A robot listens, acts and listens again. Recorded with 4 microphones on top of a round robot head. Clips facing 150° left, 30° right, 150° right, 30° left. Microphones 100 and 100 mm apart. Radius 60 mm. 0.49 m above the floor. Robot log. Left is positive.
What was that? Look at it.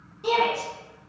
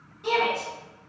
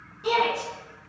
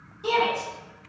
note: The shout: 95° left.
cmd yaw +95
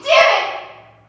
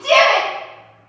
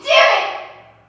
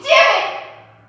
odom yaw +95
note: The shout is now 35° left.
cmd yaw +35
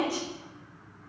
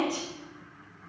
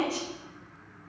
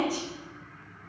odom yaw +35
cmd idle
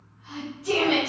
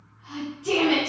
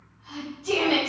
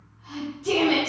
note: The shout is now 25° left.
cmd yaw +25
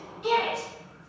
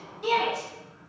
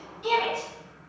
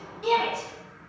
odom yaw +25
end: Facing the shout, 1 to 2 m away.